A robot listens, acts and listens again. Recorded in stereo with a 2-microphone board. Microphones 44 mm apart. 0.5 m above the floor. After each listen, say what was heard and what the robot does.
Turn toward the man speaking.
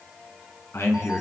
Turn 90° left.
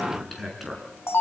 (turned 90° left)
Facing the man speaking, over 4 m away.